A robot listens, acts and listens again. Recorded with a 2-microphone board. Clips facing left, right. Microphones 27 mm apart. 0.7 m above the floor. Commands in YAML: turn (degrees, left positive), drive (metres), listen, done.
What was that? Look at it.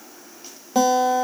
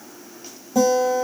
turn: 50
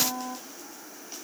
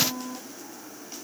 turn: 65
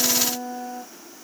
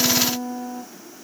done: "Found it: a guitar, straight ahead."